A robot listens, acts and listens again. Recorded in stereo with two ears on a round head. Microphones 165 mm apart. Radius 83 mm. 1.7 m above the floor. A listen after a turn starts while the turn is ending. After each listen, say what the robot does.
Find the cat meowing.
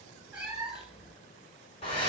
Turn 30° right.
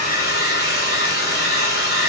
Keep listening.
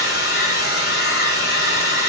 Keep listening.
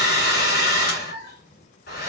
Turn 65° left.
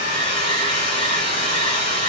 Keep listening.
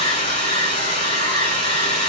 Keep listening.
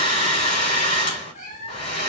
Turn 45° left.
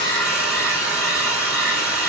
Keep listening.
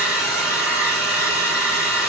Keep listening.
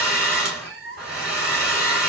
Found it: a cat meowing, straight ahead.